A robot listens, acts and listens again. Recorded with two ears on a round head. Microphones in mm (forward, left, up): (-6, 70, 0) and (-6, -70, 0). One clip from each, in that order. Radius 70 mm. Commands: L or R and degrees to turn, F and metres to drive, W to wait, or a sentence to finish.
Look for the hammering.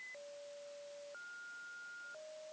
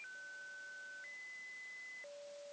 W
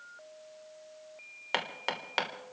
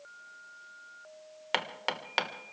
R30
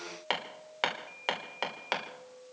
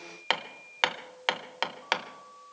R135
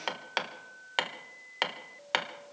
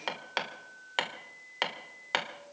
Facing the hammering, 1 to 2 m away.